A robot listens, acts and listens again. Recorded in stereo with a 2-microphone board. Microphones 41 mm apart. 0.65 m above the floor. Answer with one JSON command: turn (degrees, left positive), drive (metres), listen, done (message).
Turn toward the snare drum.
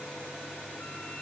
{"listen": true}
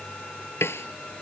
{"turn": 90}
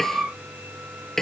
{"turn": 10}
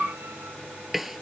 {"done": "Facing the snare drum."}